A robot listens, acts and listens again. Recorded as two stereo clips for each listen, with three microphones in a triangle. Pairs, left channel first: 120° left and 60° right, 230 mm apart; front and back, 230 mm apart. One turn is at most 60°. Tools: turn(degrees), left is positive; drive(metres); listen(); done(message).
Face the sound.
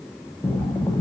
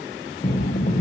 turn(degrees=45)
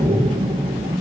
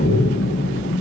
done("Facing the breathing, under 1 m away.")